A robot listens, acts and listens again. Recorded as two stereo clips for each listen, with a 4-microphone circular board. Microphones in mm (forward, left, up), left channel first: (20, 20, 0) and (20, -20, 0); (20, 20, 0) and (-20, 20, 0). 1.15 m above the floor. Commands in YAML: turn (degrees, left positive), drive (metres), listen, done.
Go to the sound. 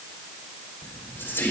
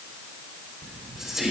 turn: 100
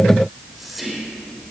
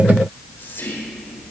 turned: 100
drive: 1.0
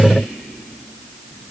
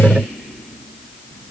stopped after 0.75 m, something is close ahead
turn: -10
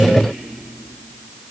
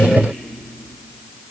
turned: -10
done: "Blocked. The whispering is further on, straight ahead."